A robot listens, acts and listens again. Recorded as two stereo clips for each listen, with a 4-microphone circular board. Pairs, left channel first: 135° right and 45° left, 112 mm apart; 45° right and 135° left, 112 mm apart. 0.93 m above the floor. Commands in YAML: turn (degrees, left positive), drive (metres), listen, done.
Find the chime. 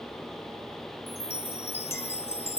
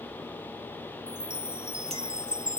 turn: -145
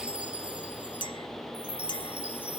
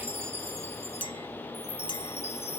turn: -35
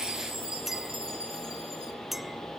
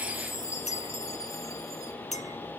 turn: 15
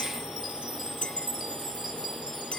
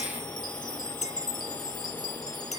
done: "Facing the chime."